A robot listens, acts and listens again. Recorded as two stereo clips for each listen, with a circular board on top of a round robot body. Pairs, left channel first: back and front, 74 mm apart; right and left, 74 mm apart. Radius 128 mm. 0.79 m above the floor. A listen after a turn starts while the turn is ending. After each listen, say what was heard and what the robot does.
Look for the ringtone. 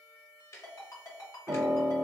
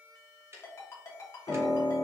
The ringtone: 140° right. Turn 140° right.
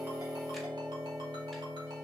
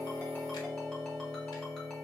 Keep listening.
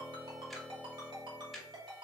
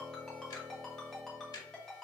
Facing the ringtone.